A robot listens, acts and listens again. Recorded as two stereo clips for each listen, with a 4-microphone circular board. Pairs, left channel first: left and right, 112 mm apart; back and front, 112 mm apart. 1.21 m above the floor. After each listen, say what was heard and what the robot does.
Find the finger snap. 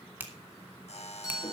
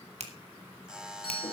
The finger snap: 15° right. Turn 15° right.
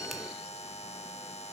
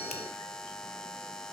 Keep listening.
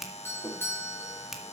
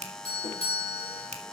Facing the finger snap, 1 to 2 m away.